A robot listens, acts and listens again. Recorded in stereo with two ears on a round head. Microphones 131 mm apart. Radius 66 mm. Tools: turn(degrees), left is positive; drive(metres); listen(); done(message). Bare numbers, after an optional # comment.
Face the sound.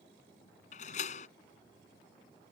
# The door slam: about 50° left or 130° left.
turn(50)
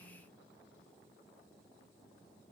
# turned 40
listen()
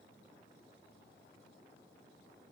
done("I heard a door slam, but can't make it out now. It was about 10° left or 90° left.")